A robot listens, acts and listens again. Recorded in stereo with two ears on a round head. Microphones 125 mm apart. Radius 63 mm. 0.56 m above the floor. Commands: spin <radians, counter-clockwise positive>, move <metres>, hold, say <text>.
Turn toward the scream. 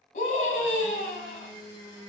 spin 1.05
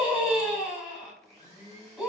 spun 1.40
say Facing the scream.